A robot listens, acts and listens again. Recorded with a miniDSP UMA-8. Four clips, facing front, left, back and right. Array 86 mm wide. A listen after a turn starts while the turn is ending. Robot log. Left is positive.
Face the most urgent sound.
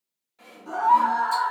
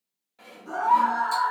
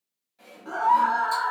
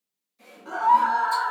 note: The scream: 140° right.
cmd yaw -140
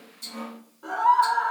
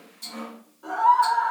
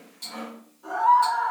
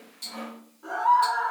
note: The scream is now 10° right.
cmd yaw -10
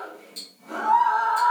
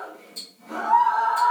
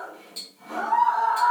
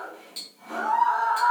end: Facing the scream.